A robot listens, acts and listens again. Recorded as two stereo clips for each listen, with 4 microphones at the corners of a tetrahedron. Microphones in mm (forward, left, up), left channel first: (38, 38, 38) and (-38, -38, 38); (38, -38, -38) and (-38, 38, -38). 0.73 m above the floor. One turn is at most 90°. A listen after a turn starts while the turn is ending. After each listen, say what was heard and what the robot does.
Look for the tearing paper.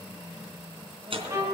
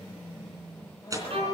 The tearing paper: 165° right. Turn 90° right.
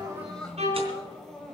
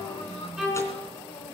Nothing new. It was at 75° right. Turn 75° right.
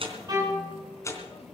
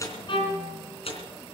The tearing paper is now 20° right. Turn 20° right.
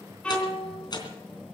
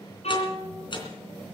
Facing the tearing paper, 2 to 4 m away.